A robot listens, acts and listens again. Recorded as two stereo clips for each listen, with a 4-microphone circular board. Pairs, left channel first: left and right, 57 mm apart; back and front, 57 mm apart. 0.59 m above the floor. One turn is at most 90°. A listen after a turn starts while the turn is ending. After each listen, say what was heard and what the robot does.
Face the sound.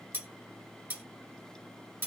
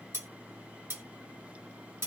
The cutlery clinking: 35° right. Turn 35° right.
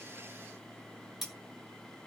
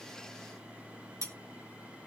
Facing the cutlery clinking, 1 to 2 m away.